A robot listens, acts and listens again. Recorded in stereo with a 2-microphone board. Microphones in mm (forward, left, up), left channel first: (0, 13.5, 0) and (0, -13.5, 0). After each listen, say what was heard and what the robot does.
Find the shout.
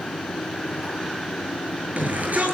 The shout: about 75° right or 105° right. Turn 75° right.
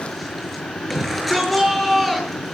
Found it: a shout, straight ahead.